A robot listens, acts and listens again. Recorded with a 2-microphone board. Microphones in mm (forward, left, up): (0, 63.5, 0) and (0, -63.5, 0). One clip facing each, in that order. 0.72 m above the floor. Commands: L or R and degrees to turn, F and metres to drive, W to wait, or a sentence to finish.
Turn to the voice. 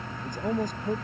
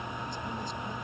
L50
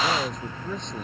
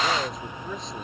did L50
Facing the man speaking.